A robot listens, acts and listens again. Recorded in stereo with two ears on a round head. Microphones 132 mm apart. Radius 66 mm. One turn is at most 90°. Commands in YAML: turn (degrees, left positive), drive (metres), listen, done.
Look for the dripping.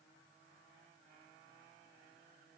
listen: true
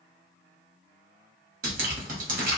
turn: -60
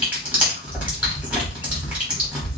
turn: -10
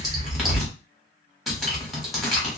done: "Found it: dripping, straight ahead, 1 to 2 m away."